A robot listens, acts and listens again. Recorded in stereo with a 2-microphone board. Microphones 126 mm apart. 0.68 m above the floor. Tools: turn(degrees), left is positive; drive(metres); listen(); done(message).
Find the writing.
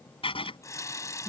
turn(degrees=50)
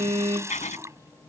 turn(degrees=85)
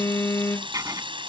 turn(degrees=-30)
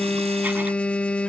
listen()
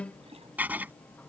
turn(degrees=-15)
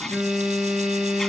listen()
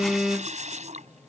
listen()
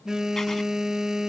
done("I heard writing from this way, but can't make it out now.")